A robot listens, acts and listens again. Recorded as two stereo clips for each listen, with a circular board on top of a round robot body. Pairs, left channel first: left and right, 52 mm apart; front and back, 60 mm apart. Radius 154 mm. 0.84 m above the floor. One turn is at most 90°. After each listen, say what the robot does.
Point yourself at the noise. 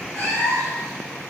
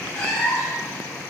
Turn 45° left.
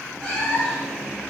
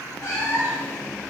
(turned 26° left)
Turn 20° left.
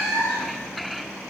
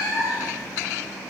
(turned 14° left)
Facing the cat meowing, 1 to 2 m away.